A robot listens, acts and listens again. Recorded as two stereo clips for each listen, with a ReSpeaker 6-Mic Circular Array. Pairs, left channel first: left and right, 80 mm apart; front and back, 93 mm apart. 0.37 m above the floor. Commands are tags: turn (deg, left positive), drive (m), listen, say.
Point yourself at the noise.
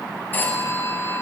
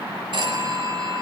<turn deg="155"/>
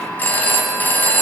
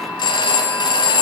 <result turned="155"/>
<turn deg="25"/>
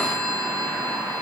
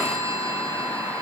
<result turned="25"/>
<say>Found it: a phone ringing, straight ahead.</say>